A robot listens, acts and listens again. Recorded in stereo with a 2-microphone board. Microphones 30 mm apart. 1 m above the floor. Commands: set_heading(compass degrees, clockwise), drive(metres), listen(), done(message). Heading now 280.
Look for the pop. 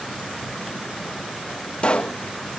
set_heading(240)
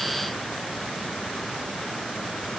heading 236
listen()
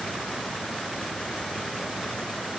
done("I heard a pop, but can't make it out now. It was about 5° right or 95° left.")